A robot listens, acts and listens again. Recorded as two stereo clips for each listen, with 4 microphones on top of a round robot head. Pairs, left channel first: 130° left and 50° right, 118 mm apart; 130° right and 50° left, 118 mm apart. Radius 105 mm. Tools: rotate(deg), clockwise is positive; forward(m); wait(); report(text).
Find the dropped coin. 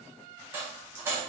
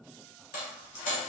rotate(125)
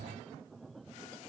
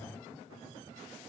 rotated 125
report("Facing where the dropped coin came from. I can't hear it now.")